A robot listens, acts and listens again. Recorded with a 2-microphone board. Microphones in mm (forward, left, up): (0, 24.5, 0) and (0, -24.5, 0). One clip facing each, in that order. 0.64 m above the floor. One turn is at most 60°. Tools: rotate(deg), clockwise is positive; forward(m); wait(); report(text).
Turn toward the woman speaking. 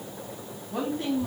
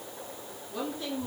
rotate(-60)
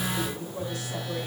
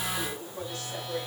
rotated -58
rotate(-10)
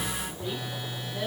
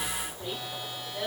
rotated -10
report("Facing the woman speaking, over 4 m away.")